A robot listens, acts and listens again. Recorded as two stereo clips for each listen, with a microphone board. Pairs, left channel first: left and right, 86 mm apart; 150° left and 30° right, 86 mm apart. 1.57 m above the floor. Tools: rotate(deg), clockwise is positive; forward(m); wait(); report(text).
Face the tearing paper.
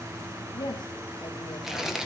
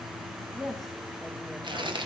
report("Facing the tearing paper, 1 to 2 m away.")